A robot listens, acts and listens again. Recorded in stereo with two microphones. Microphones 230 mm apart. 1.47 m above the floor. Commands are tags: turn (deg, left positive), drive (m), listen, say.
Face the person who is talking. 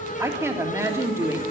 <turn deg="-30"/>
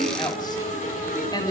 <turn deg="15"/>
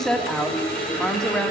<say>Found it: a woman speaking, straight ahead.</say>